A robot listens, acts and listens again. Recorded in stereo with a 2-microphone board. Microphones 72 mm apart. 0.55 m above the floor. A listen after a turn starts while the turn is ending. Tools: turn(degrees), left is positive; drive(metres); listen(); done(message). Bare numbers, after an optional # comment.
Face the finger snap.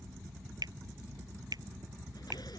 turn(-90)
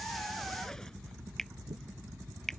done("Facing the finger snap.")